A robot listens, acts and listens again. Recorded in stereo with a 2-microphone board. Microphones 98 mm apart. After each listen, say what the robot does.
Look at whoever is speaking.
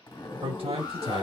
Turn 65° right.
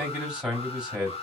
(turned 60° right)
Turn 10° right.
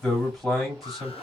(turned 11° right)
Found it: a man speaking, straight ahead.